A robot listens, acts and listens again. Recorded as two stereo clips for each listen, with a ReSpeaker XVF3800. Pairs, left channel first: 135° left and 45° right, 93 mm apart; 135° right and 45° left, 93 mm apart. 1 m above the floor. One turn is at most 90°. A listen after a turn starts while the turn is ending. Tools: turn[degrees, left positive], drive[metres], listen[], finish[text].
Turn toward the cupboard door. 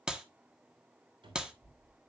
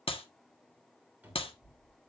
Thought: The cupboard door: 25° right.
Action: turn[-25]
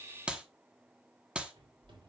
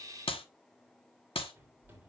Thought: The cupboard door is now 25° right.
Action: turn[-25]
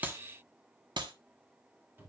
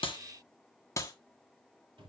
Thought: The cupboard door is now 20° left.
Action: turn[20]
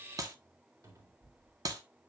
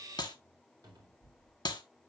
Action: finish[Found it: a cupboard door, straight ahead, 2 to 4 m away.]